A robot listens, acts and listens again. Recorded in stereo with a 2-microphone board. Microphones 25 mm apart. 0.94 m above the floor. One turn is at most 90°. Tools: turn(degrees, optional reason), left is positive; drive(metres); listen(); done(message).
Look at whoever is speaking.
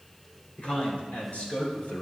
turn(degrees=75, reason="The man speaking: about 75° left or 105° left.")
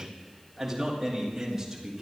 turn(degrees=-15, reason="So it is at 15° right.")
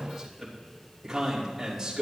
turn(degrees=-15, reason="The man speaking is now 15° right.")
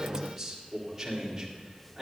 done("Facing the man speaking.")